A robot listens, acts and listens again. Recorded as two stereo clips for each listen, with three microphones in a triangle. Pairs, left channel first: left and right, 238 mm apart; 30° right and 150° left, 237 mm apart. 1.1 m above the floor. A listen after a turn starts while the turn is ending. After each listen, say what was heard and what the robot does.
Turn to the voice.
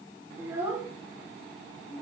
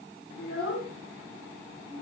Found it: a child speaking, straight ahead, 2 to 4 m away.